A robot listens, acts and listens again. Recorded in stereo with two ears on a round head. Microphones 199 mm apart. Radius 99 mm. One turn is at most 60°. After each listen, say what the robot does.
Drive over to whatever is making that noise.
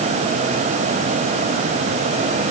Keep listening.
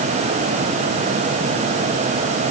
Keep listening.
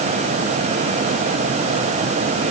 I can't make out anything to turn to.